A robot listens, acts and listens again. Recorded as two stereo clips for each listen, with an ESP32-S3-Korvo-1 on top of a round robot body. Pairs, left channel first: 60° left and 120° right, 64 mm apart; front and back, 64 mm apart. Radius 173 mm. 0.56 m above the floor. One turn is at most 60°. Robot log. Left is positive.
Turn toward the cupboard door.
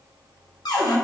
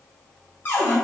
note: The cupboard door: 60° left.
cmd yaw +60
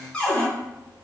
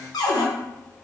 note: The cupboard door is now 15° right.
cmd yaw -15
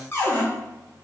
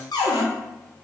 end: Facing the cupboard door.